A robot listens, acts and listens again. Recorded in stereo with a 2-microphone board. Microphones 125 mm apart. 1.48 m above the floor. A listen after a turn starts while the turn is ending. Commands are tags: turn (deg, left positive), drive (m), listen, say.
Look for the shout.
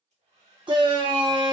<turn deg="-40"/>
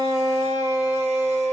<turn deg="-95"/>
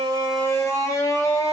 <turn deg="25"/>
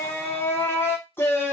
<turn deg="20"/>
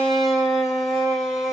<say>Facing the shout, under 1 m away.</say>